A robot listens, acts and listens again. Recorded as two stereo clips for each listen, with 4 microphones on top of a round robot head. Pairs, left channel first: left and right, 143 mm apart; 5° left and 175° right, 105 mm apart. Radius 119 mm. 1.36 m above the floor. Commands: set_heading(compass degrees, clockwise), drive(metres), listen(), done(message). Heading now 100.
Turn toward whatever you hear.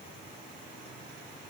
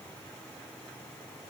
listen()
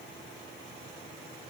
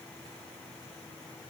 listen()
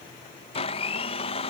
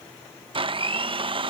set_heading(315)
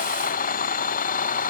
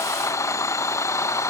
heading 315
set_heading(250)
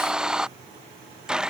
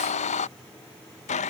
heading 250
done("Found it: a blender, straight ahead.")